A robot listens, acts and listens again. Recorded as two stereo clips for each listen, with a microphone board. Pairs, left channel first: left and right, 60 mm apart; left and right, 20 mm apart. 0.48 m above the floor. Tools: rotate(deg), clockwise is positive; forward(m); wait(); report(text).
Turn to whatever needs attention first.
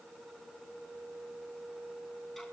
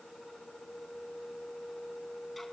wait()
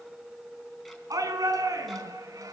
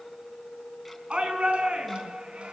rotate(75)
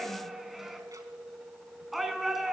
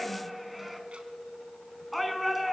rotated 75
report("Found it: a shout, straight ahead.")